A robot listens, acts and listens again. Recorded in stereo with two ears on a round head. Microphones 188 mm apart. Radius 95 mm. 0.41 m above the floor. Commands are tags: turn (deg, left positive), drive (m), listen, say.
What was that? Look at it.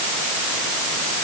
<listen/>
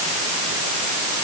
<listen/>
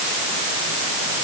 <say>I can't make out anything to turn to.</say>